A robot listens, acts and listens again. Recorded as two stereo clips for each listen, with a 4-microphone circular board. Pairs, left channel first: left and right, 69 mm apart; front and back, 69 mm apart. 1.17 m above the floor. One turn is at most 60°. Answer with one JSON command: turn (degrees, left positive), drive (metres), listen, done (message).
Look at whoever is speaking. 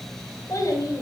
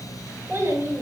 {"turn": 60}
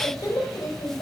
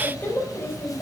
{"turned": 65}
{"turn": 60}
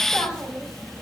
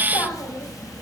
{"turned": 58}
{"listen": true}
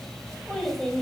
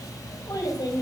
{"done": "Found it: a child speaking, straight ahead."}